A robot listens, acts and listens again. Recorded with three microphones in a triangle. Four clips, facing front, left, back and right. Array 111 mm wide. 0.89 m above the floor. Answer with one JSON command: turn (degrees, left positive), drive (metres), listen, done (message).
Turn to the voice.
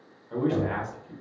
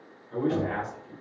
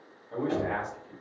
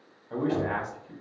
{"turn": -75}
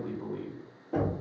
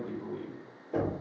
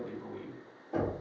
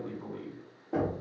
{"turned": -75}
{"done": "Found it: a man speaking, straight ahead."}